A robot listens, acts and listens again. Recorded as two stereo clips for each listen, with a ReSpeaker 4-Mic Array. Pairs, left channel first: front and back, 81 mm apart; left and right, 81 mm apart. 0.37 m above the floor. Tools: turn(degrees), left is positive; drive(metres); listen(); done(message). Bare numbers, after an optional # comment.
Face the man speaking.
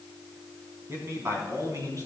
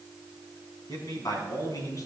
# The man speaking: 135° left.
turn(135)
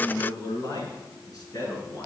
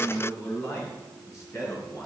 # The man speaking is now 40° left.
turn(40)
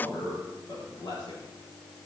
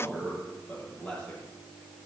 # The man speaking is now 10° left.
turn(10)
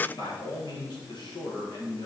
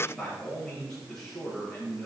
done("Facing the man speaking.")